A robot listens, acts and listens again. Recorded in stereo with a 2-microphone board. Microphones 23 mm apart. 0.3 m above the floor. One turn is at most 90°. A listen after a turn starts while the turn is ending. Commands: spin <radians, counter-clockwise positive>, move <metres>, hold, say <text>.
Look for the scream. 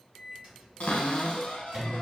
hold
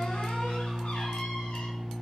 hold
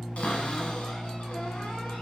say I can't make out a scream, only a microwave and a cupboard door.